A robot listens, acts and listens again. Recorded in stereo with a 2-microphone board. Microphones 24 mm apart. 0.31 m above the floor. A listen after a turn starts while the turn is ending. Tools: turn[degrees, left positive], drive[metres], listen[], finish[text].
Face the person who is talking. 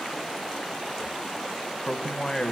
Thought: The man speaking: about 25° left or 155° left.
Action: turn[25]
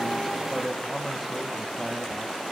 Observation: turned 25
Action: finish[Facing the man speaking.]